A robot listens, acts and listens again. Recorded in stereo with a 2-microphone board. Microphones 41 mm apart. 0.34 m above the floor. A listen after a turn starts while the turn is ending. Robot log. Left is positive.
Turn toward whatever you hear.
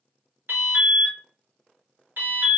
note: The alarm: about 55° right or 125° right.
cmd yaw -55
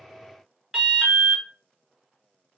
note: So it is at 10° right.
cmd yaw -10
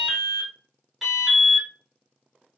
end: Found it: an alarm, straight ahead, 1 to 2 m away.